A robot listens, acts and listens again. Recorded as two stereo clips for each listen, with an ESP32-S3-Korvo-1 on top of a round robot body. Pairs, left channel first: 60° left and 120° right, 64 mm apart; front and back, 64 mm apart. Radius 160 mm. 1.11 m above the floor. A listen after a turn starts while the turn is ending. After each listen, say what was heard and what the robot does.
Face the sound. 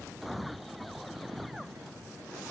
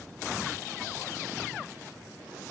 Keep listening.
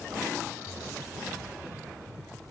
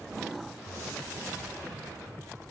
Keep listening.
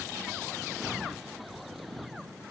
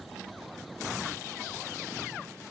I can't make out anything to turn to.